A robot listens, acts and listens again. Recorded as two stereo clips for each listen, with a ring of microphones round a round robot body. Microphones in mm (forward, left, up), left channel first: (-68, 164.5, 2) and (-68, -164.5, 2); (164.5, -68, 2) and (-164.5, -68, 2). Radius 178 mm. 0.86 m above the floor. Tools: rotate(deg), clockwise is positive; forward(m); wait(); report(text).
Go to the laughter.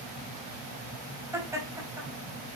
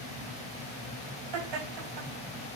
rotate(170)
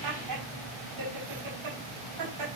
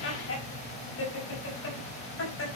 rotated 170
rotate(50)
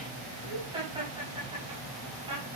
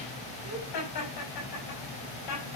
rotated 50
rotate(15)
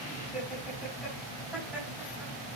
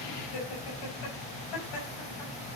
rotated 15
forward(1.0)
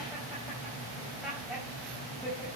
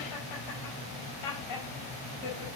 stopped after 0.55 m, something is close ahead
report("Blocked. The laughter is further on, straight ahead.")